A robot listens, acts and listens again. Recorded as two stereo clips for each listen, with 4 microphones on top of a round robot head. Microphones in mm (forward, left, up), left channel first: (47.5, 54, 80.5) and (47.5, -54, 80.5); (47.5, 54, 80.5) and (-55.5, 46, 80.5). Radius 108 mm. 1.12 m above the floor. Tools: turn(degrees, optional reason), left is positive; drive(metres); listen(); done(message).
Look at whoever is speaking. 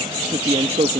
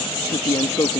turn(degrees=-65, reason="The man speaking: 65° right.")
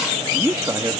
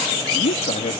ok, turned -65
turn(degrees=-30, reason="The man speaking is now 30° right.")
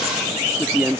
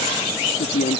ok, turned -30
turn(degrees=-15, reason="The man speaking is now 15° right.")
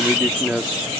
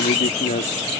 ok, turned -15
done("Found it: a man speaking, straight ahead.")